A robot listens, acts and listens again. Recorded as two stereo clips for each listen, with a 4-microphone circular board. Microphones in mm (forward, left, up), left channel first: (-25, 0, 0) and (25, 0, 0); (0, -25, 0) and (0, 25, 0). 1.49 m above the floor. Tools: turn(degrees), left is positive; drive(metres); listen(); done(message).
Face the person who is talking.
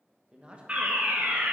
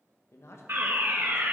turn(degrees=-70)
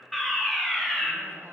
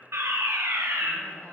listen()
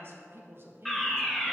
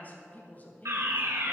turn(degrees=-35)
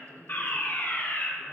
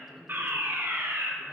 done("Found it: a woman speaking, straight ahead, 1 to 2 m away.")